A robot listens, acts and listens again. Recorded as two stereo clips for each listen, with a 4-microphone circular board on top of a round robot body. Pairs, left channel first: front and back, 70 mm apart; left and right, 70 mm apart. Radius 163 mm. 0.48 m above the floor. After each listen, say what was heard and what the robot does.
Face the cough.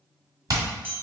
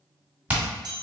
Keep listening.
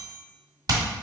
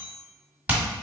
Keep listening.
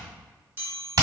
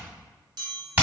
I can't make out a cough, only hammering and a chime.